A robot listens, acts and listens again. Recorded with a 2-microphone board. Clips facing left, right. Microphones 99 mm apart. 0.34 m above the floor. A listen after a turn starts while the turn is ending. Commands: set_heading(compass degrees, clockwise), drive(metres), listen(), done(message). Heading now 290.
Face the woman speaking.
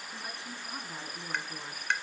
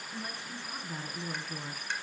set_heading(260)
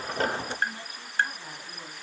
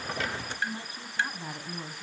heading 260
set_heading(285)
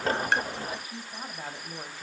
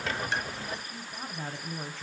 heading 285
set_heading(275)
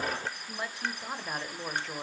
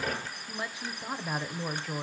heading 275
done("Found it: a woman speaking, straight ahead, 1 to 2 m away.")